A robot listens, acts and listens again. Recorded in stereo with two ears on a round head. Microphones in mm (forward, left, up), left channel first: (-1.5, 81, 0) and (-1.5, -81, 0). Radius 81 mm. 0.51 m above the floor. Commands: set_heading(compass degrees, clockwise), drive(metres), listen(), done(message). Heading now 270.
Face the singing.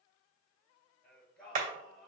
set_heading(240)
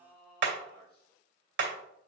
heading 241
set_heading(91)
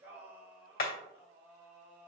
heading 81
set_heading(91)
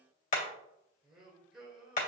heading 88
done("Found it: singing, straight ahead.")